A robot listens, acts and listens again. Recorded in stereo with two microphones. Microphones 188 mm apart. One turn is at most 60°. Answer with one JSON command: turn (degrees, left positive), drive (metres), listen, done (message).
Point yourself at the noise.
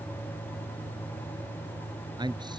{"turn": -25}
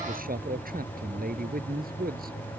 {"turn": -60}
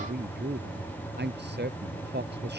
{"turn": -60}
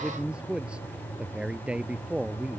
{"done": "Facing the man speaking."}